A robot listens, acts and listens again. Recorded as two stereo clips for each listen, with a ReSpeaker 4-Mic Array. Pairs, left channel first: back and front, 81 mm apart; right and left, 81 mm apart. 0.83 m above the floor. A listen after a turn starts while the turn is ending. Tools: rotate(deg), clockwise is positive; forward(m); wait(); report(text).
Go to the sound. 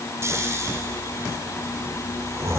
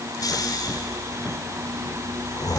rotate(55)
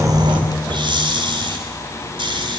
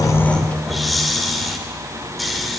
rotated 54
forward(1.0)
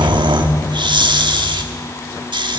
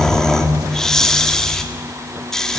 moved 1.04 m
rotate(10)
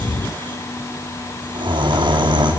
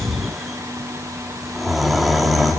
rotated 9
forward(1.0)
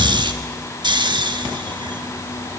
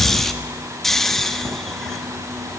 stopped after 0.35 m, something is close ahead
report("Arrived at the snoring, straight ahead.")